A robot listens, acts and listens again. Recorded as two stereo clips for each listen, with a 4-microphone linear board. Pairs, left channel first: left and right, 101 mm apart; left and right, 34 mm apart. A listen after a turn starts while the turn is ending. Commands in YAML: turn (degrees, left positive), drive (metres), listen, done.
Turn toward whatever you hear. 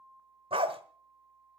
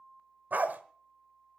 turn: -60
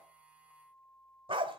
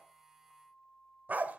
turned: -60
turn: -55
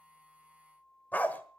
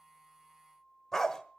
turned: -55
turn: 15
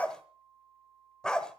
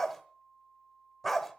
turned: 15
done: "Facing the dog barking, 1 to 2 m away."